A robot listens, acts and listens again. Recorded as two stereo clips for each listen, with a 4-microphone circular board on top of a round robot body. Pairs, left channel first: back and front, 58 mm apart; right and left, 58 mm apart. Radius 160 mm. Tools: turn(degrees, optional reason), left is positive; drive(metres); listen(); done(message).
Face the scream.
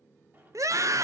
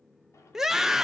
done("Found it: a scream, straight ahead.")